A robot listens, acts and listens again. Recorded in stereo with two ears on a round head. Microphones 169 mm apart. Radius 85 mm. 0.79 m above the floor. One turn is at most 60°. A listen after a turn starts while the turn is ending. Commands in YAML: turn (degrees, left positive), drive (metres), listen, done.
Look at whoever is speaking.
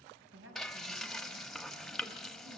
turn: -60
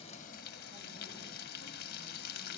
turn: -30
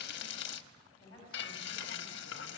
turn: 25
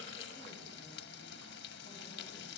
listen: true
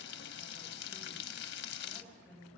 done: "Facing the woman speaking, over 4 m away."